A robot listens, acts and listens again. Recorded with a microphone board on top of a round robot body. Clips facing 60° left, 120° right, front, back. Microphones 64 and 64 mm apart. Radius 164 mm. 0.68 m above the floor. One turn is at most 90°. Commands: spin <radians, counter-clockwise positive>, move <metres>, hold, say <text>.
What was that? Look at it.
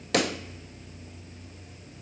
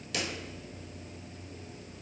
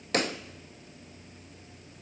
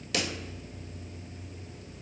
spin 0.70
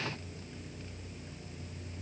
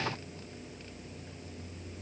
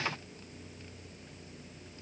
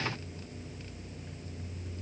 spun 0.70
say I heard a pop from this way, but can't make it out now.